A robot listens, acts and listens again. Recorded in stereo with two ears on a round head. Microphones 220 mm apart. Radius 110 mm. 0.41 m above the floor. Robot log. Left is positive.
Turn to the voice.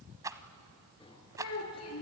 note: The child speaking: about 65° left or 115° left.
cmd yaw +65
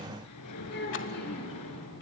note: So it is at 45° left.
cmd yaw +45
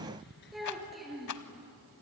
end: Found it: a child speaking, straight ahead.